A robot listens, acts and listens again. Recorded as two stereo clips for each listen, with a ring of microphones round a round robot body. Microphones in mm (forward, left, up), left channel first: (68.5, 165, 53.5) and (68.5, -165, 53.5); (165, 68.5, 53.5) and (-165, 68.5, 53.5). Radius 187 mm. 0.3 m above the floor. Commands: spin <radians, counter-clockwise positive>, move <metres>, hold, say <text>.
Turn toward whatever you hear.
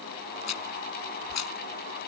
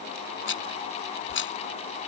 spin 0.96
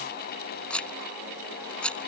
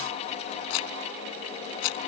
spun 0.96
say Facing the rattle.